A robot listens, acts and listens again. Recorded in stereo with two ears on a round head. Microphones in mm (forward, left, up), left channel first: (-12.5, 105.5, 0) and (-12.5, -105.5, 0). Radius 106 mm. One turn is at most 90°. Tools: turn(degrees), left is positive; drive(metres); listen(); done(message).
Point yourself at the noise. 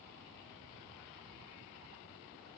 listen()
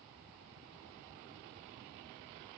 listen()
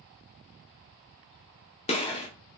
turn(degrees=25)
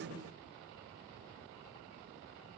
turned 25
listen()
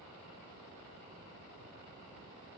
done("I heard a gunshot, but can't make it out now. It was about straight ahead or 130° left.")